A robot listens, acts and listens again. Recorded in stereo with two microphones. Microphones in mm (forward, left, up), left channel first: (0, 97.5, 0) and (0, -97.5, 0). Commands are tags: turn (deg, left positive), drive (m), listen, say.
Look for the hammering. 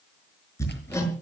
<turn deg="30"/>
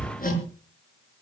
<turn deg="135"/>
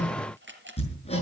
<turn deg="30"/>
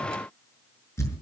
<turn deg="15"/>
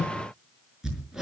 <say>Found it: hammering, straight ahead.</say>